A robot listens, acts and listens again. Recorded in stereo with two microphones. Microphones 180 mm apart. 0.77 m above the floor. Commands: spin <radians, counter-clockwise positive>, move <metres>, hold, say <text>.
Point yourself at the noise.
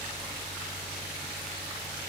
hold
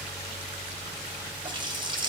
spin -0.44
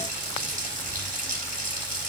spin -2.27
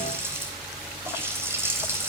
spin -0.26
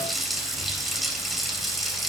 say Facing the running tap.